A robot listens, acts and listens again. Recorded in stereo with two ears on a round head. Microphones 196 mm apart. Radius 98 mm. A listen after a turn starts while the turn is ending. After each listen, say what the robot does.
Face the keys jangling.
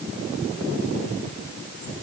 Keep listening.
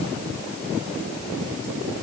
Keep listening.
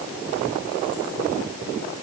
I can't make out keys jangling to turn to.